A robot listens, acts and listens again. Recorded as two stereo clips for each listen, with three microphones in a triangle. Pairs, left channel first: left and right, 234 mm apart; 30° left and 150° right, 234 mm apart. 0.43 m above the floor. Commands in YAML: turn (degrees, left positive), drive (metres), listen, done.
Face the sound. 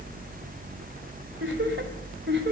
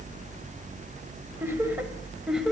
turn: -60
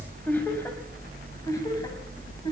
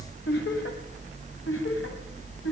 turn: 20
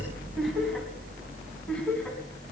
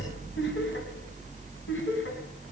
done: "Facing the laughter, 2 to 4 m away."